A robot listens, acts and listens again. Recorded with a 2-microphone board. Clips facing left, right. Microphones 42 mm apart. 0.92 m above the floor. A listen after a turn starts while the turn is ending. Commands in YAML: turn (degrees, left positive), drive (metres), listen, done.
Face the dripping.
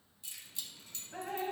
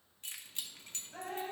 turn: 45
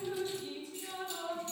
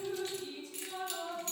turn: 10
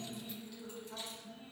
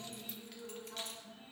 done: "Found it: dripping, straight ahead."